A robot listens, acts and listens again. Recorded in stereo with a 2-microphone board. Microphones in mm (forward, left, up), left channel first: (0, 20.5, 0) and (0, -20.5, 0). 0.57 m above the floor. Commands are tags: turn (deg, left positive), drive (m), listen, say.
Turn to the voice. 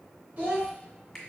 <turn deg="-45"/>
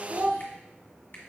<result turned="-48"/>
<turn deg="-70"/>
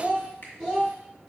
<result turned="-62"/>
<turn deg="-15"/>
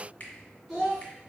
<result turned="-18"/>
<say>Facing the child speaking, 2 to 4 m away.</say>